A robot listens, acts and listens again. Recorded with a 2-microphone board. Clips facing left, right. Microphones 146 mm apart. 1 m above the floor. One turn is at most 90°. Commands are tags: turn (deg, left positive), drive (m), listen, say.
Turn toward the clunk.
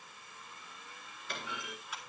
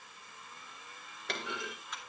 <turn deg="-90"/>
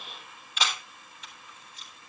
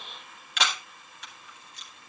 <say>Facing where the clunk came from. I can't hear it now.</say>